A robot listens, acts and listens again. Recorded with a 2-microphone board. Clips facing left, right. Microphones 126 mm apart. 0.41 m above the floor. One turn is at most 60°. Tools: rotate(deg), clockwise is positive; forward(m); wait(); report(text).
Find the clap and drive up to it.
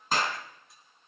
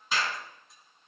rotate(-50)
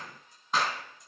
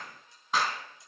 forward(1.0)
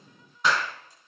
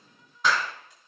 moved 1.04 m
forward(1.0)
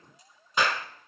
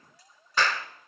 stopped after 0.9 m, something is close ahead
rotate(-25)
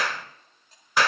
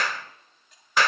rotate(-10)
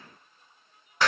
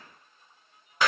report("I am next to the clap.")